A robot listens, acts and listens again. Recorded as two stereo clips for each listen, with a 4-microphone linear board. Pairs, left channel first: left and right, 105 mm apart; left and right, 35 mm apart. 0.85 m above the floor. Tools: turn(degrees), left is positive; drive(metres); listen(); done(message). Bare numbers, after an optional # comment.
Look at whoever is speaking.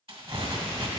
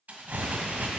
listen()
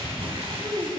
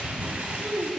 # The child speaking: about 45° right or 135° right.
turn(-45)
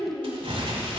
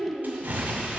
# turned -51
# So it is at 20° left.
turn(20)
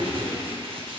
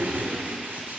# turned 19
listen()
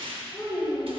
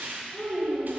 # The child speaking is now 20° left.
turn(20)
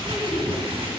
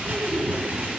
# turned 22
listen()
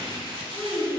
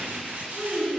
done("Found it: a child speaking, straight ahead, 2 to 4 m away.")